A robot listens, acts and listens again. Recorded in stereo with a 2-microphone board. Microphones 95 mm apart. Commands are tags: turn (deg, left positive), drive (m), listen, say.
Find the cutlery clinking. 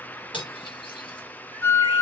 <turn deg="60"/>
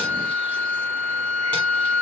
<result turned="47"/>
<listen/>
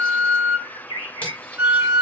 <listen/>
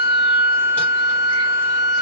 <say>I heard cutlery clinking, but can't make it out now. It was about 10° left or 75° left.</say>